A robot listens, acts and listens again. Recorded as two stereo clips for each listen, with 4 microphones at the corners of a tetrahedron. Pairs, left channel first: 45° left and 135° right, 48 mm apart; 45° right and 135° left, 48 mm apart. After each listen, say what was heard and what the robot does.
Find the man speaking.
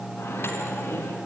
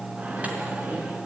Keep listening.
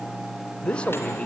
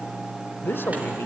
The man speaking: 20° right. Turn 20° right.
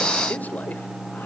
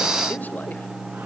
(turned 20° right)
Keep listening.
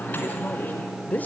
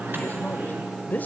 Facing the man speaking, 1 to 2 m away.